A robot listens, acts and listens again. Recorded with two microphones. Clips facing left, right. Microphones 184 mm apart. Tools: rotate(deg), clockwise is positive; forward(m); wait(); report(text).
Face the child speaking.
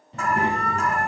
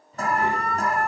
rotate(-70)
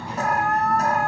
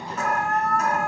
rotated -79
rotate(-15)
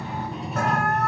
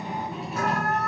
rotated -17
report("Found it: a child speaking, straight ahead, 2 to 4 m away.")